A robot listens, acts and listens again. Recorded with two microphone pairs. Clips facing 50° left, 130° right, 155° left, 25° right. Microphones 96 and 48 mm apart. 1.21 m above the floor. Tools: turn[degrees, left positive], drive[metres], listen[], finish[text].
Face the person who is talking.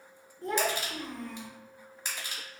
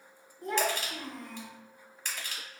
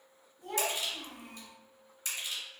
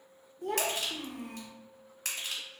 Thought: The child speaking: 55° right.
Action: turn[-55]
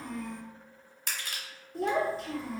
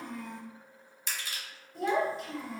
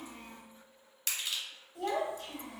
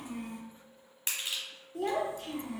Action: finish[Facing the child speaking.]